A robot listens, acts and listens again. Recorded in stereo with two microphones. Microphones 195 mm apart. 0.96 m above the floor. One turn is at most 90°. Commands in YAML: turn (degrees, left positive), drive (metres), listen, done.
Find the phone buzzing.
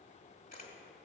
listen: true
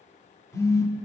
turn: 30
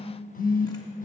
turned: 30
turn: 90
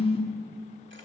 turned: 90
turn: 30
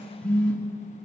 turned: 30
done: "Found it: a phone buzzing, straight ahead, under 1 m away."